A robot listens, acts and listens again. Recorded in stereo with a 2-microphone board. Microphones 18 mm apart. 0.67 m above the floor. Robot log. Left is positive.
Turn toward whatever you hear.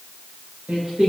note: The singing: about 65° right or 115° right.
cmd yaw -65
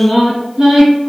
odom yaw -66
note: So it is at 55° right.
cmd yaw -55
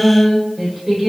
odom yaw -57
note: The singing is now 20° right.
cmd yaw -20
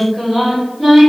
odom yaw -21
note: The singing is now 10° right.
cmd yaw -10
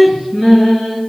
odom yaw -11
end: Found it: singing, straight ahead, 2 to 4 m away.